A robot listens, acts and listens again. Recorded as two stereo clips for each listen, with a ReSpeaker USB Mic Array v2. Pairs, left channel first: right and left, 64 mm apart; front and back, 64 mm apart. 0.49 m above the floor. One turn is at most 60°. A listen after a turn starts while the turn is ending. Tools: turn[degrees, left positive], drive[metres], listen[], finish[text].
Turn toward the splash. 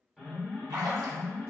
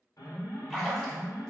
Thought: The splash: 90° left.
Action: turn[60]
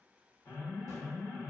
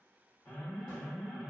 Thought: Nothing new. It was at 30° left.
Action: turn[30]
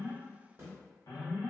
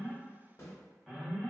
Action: finish[Facing where the splash came from. I can't hear it now.]